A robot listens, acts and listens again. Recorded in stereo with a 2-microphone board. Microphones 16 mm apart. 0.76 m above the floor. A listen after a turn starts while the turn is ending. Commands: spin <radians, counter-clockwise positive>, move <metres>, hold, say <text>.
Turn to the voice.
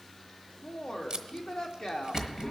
spin 1.05
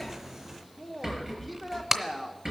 say Facing the woman speaking, 1 to 2 m away.